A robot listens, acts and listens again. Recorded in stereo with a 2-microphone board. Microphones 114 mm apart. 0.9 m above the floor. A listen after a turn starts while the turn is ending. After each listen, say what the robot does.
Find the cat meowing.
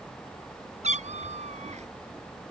Turn 90° right.
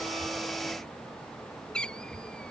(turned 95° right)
Turn 10° left.
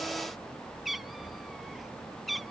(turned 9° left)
Facing the cat meowing.